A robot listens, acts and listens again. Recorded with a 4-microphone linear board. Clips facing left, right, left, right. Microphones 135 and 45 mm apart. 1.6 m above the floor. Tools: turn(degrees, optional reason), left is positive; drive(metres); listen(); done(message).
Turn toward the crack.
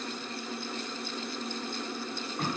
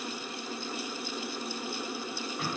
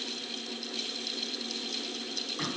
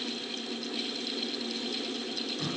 listen()
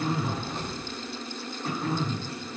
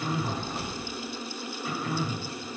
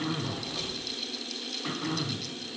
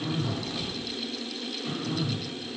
turn(degrees=30)
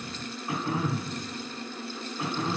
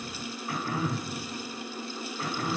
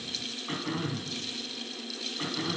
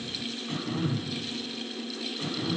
listen()
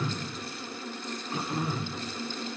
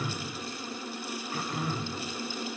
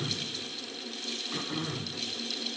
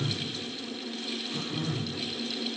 done("I heard a crack, but can't make it out now. It was about 30° right or 150° left.")